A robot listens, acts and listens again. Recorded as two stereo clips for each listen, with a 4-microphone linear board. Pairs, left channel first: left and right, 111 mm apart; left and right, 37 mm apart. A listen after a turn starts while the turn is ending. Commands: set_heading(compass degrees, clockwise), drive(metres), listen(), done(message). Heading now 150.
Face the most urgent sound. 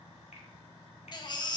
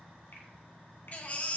set_heading(110)
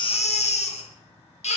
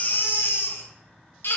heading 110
set_heading(10)
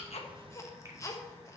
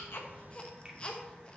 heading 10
set_heading(340)
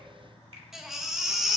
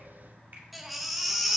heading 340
done("Facing the baby crying.")